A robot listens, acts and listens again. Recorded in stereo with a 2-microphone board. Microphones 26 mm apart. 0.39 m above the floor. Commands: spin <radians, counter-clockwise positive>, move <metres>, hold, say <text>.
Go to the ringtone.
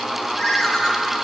spin 0.52
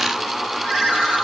spin -0.52
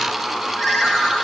spin -0.17
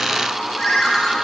move 1.0
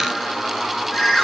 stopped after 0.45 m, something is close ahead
say Blocked. The ringtone is further on, straight ahead.